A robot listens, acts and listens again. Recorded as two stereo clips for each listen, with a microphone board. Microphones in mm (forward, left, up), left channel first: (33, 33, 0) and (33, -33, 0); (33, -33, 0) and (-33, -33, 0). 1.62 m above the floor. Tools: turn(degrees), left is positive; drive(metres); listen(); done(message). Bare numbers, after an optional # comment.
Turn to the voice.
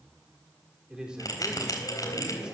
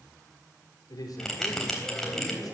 # The man speaking: 15° right.
turn(-15)
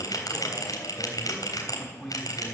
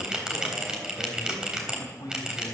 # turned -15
done("Facing the man speaking, over 4 m away.")